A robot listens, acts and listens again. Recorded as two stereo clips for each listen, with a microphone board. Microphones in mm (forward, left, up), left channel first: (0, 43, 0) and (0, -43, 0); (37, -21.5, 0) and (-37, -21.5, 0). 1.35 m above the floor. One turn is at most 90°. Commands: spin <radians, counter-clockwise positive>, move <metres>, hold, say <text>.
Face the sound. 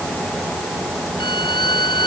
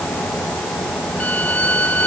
spin 1.22
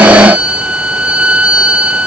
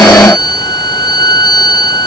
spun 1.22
spin -0.17
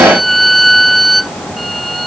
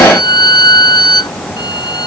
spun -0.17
say Facing the violin.